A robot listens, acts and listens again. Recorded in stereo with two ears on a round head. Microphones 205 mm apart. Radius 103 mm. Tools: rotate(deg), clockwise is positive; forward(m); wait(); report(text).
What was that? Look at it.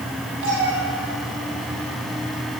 rotate(60)
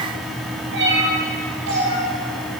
rotate(55)
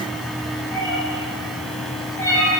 rotate(-15)
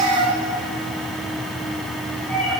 report("Found it: a cat meowing, straight ahead.")